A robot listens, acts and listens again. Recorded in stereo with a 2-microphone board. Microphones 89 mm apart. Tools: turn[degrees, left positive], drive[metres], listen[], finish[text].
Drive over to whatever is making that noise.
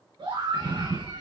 Thought: The scream: about 65° right or 115° right.
Action: turn[-65]
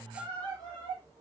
Thought: So it is at 50° right.
Action: turn[-50]
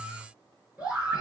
Thought: The scream is now 15° right.
Action: turn[-15]
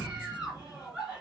Action: drive[1.0]
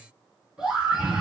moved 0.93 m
Thought: The scream is now 10° right.
Action: turn[-10]
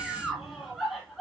Action: drive[1.0]
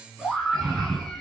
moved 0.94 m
Action: drive[1.0]
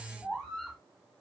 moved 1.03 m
Action: drive[1.0]
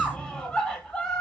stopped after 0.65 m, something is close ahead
Thought: The scream is now 15° left.
Action: turn[15]
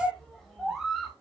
Action: finish[Arrived at the scream, straight ahead.]